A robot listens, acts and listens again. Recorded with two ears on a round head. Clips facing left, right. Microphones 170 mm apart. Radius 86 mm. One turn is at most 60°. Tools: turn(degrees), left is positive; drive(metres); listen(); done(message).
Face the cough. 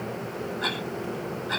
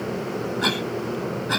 turn(degrees=-60)
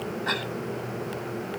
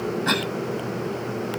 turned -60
turn(degrees=-60)
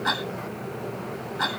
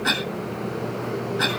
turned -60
turn(degrees=-30)
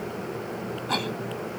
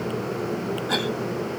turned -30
turn(degrees=-10)
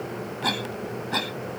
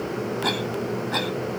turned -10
done("Facing the cough.")